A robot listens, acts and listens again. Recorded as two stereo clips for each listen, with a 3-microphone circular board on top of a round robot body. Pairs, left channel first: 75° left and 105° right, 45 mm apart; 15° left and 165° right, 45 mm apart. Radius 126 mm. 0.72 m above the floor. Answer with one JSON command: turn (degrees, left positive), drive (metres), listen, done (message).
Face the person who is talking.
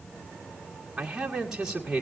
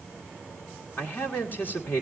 {"turn": -25}
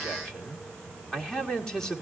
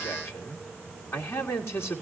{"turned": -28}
{"done": "Found it: a man speaking, straight ahead, 1 to 2 m away."}